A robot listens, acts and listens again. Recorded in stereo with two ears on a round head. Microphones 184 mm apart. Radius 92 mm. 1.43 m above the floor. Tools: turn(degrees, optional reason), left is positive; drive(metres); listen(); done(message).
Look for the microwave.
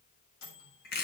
turn(degrees=90)
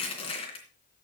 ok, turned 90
listen()
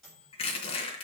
done("Found it: a microwave, straight ahead, over 4 m away.")